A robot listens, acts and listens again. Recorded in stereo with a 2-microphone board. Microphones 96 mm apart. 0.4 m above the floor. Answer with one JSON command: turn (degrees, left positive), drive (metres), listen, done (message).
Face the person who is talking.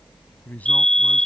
{"turn": 15}
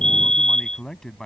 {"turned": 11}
{"done": "Found it: a man speaking, straight ahead."}